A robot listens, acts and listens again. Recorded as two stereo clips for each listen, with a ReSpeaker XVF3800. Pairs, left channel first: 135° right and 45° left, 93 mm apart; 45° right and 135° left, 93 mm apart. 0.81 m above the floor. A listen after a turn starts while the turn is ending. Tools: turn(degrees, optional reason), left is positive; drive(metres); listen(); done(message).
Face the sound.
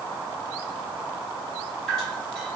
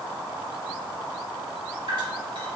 turn(degrees=145, reason="The dripping: 145° left.")
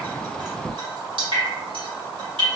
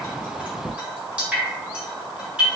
turn(degrees=60, reason="The dripping is now 60° left.")
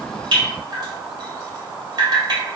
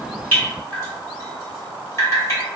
turn(degrees=10, reason="The dripping is now 10° left.")
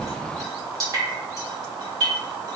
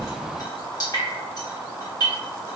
done("Facing the dripping.")